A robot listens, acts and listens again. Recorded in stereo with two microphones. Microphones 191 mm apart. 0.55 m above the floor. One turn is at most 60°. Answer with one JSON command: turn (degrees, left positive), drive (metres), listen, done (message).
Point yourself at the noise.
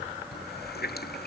{"turn": 55}
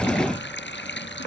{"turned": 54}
{"turn": 60}
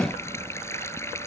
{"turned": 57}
{"turn": 15}
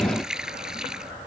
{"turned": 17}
{"done": "Found it: a running tap, straight ahead."}